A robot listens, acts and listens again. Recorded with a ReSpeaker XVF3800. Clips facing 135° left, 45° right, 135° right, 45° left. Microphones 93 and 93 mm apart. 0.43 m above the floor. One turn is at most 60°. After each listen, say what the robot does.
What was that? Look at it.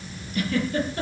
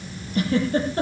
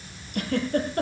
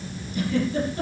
Turn 60° right.
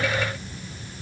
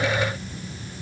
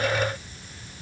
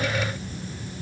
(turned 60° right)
Turn 45° right.
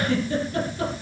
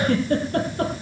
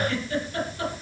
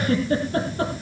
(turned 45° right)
Turn 10° right.
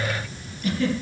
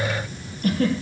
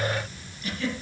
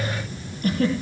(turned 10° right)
Found it: a giggle, straight ahead, over 4 m away.